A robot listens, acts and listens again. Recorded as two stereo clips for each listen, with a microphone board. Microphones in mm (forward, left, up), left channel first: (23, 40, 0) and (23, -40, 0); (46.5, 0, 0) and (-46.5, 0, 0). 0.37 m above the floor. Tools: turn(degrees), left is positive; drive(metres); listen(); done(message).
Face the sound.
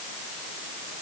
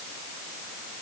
listen()
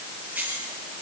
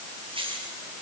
turn(degrees=-160)
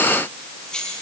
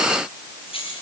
turn(degrees=10)
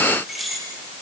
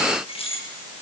done("Facing the keys jangling.")